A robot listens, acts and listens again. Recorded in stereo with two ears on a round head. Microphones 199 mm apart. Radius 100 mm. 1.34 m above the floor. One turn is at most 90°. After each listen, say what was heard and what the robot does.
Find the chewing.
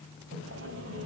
Keep listening.
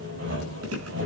The chewing: about 75° right or 105° right. Turn 75° right.
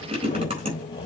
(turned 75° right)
So it is at 25° right. Turn 25° right.
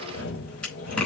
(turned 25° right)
Found it: chewing, straight ahead, over 4 m away.